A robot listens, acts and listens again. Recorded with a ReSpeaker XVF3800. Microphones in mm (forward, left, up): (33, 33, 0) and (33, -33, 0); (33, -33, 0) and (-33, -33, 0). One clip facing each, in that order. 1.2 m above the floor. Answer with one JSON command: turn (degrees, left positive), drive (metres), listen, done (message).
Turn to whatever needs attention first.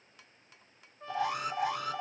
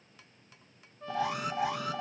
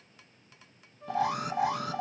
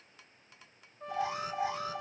{"done": "Facing the alarm, under 1 m away."}